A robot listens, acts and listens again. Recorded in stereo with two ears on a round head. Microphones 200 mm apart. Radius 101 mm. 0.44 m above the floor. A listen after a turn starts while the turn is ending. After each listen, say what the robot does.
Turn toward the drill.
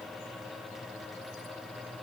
Keep listening.
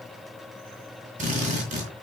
Turn 35° right.
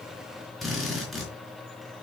Facing the drill.